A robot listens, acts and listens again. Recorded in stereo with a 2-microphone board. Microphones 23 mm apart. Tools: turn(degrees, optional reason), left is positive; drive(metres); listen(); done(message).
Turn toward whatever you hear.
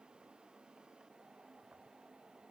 listen()
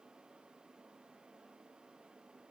listen()
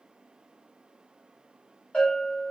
turn(degrees=65, reason="The bell: about 65° left or 115° left.")
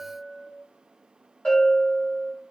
turn(degrees=45, reason="So it is at 45° left.")
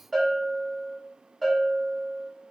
done("Facing the bell.")